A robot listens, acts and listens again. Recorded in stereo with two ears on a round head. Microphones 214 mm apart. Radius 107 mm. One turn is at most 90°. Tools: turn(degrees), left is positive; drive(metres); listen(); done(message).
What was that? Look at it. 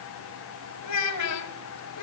turn(degrees=75)
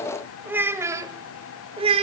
turn(degrees=-25)
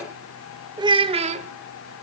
turn(degrees=-30)
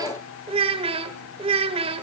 turn(degrees=-25)
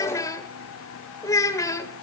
turn(degrees=15)
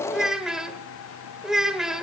done("Found it: a child speaking, straight ahead.")